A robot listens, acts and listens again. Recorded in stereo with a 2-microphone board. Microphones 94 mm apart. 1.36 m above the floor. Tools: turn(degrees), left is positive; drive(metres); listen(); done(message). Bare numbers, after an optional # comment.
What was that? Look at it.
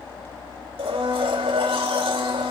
turn(-90)
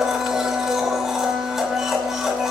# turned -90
done("Facing the blender.")